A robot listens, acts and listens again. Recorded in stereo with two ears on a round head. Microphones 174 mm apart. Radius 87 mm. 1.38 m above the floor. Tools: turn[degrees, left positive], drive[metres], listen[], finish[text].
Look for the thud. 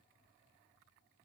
Action: listen[]
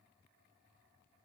Action: listen[]
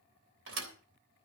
Thought: The thud: about 70° right or 110° right.
Action: turn[-70]
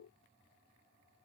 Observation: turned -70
Action: listen[]
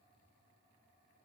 Action: finish[I heard a thud, but can't make it out now. It was about straight ahead or 40° right.]